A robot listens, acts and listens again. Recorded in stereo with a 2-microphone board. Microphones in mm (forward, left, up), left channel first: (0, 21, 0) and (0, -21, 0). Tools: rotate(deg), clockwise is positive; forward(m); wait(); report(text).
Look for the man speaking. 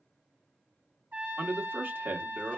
rotate(55)
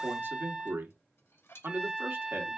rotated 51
rotate(70)
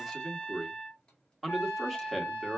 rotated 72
report("Found it: a man speaking, straight ahead, 1 to 2 m away.")